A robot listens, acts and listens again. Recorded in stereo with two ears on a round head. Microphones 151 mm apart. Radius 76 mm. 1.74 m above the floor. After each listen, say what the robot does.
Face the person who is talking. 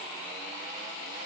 Keep listening.
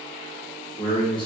Turn 30° left.
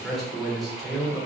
Facing the man speaking.